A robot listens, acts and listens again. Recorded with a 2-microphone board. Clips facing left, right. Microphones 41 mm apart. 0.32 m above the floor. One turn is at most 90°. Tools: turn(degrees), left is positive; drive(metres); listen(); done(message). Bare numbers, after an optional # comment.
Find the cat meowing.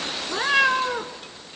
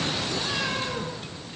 # The cat meowing: about 50° left or 130° left.
turn(50)
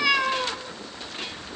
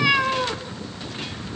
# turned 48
# So it is at 15° right.
turn(-15)
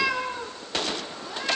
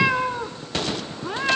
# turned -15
# The cat meowing is now 45° right.
turn(-45)
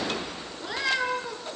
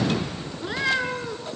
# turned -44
# The cat meowing is now 20° right.
turn(-20)
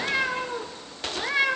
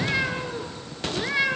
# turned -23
done("Found it: a cat meowing, straight ahead.")